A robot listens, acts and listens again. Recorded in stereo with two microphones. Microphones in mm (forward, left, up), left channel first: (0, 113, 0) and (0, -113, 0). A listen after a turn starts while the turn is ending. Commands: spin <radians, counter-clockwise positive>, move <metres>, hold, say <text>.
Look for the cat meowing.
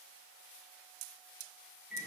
hold
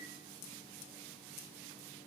hold
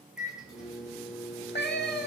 spin 0.87
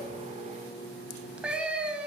say Found it: a cat meowing, straight ahead, under 1 m away.